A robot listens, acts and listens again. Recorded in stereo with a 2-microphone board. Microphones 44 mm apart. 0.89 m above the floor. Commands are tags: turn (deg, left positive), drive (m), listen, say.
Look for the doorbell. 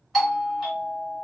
<turn deg="30"/>
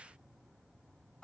<turn deg="155"/>
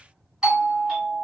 <turn deg="-10"/>
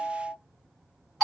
<say>Facing the doorbell, 1 to 2 m away.</say>